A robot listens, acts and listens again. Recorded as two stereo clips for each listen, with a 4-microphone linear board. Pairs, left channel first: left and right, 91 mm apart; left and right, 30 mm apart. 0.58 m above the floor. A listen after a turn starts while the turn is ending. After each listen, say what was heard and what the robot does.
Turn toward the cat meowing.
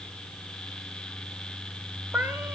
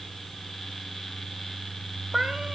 The cat meowing: about 20° right or 160° right. Turn 20° right.
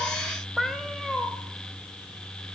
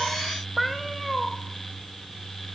Found it: a cat meowing, straight ahead, under 1 m away.